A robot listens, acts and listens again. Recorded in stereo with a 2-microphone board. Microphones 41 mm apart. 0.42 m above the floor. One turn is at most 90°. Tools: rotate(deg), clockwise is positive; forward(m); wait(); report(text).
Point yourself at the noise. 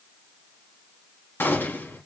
rotate(-65)
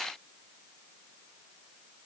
wait()
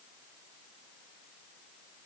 report("I heard a gunshot, but can't make it out now. It was about straight ahead or 50° left.")